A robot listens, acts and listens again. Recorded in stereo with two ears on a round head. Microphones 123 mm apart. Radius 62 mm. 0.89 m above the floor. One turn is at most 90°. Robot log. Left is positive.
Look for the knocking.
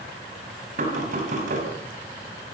note: The knocking: about 60° right or 120° right.
cmd yaw -60
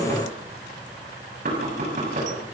note: So it is at 55° right.
cmd yaw -55
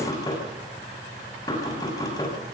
note: The knocking is now 25° left.
cmd yaw +25
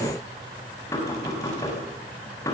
note: The knocking is now 20° left.
cmd yaw +20
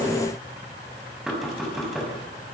end: Found it: knocking, straight ahead, over 4 m away.